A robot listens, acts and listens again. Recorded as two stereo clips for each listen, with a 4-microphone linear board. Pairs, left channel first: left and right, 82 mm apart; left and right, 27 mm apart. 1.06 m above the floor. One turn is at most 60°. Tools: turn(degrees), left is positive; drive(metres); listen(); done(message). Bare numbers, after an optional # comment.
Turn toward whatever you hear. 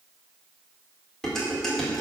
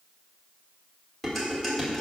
turn(30)
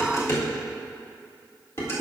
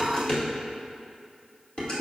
# So it is at 145° left.
turn(60)
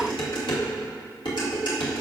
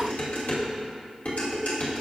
# The dishes clattering is now 90° left.
turn(60)
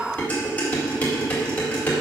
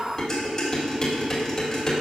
# The dishes clattering is now 20° left.
turn(20)
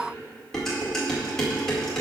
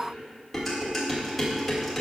done("Facing the dishes clattering, 2 to 4 m away.")